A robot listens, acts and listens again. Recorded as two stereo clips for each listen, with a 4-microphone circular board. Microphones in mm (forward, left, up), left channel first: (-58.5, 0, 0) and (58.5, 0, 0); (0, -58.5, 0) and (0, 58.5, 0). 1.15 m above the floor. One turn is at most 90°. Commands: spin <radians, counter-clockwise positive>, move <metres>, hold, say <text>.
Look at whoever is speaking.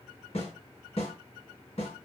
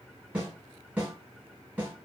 hold
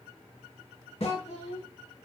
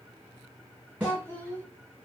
spin -1.57
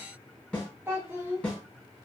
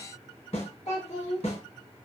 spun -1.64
spin -1.22
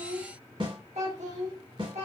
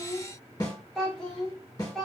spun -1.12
say Found it: a child speaking, straight ahead.